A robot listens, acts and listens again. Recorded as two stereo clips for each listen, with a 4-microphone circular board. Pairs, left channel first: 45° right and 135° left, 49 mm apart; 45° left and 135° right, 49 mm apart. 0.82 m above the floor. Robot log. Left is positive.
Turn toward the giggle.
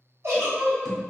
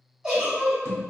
note: The giggle: 145° left.
cmd yaw +145
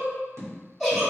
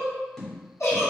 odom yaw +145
note: The giggle is now 40° left.
cmd yaw +40
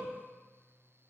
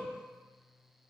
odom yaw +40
cmd idle
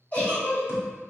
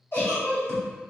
note: The giggle is now 10° left.
cmd yaw +10
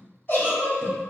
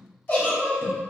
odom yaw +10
end: Facing the giggle.